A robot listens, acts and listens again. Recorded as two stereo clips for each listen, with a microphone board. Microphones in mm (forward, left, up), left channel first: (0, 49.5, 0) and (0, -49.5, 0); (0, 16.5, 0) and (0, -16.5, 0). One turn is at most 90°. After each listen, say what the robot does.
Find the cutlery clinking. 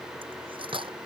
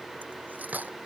Turn 60° right.
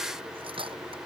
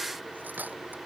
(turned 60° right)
Turn 60° right.
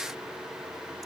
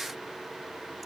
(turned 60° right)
Keep listening.
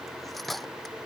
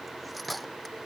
Found it: cutlery clinking, straight ahead.